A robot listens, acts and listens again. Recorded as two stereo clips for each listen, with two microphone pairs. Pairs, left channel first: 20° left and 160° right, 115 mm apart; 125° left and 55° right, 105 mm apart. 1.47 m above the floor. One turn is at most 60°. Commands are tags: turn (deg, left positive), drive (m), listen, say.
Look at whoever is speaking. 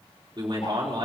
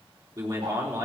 <turn deg="-60"/>
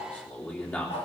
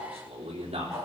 <turn deg="-60"/>
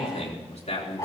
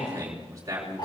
<say>Facing the man speaking.</say>